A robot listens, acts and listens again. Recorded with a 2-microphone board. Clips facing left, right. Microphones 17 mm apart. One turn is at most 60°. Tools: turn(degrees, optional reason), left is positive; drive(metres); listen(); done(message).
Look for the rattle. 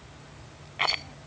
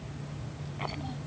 turn(degrees=55, reason="The rattle: about 55° left or 125° left.")
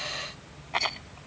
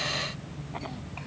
turn(degrees=60, reason="So it is at 70° left.")
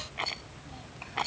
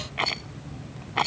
turn(degrees=-20, reason="The rattle is now 20° right.")
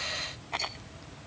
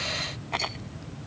turn(degrees=-10, reason="The rattle is now 10° right.")
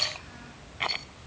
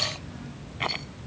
done("Found it: a rattle, straight ahead.")